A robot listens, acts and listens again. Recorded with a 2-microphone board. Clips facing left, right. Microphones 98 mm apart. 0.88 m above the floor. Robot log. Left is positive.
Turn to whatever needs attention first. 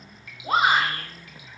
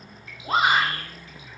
cmd yaw +30
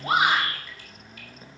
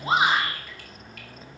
note: So it is at 25° right.
cmd yaw -25
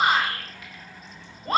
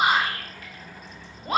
end: Found it: a shout, straight ahead, 2 to 4 m away.